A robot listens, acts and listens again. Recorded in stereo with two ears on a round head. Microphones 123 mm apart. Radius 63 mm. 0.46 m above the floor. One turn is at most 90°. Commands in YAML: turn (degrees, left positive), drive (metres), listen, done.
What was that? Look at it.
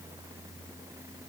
listen: true
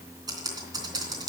turn: -25
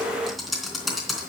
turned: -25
done: "Facing the typing on a keyboard."